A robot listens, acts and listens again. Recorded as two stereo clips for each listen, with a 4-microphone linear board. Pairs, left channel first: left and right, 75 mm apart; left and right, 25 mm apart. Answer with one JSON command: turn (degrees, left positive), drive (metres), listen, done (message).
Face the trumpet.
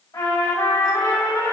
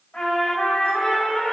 {"turn": 65}
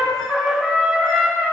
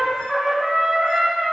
{"done": "Facing the trumpet, 2 to 4 m away."}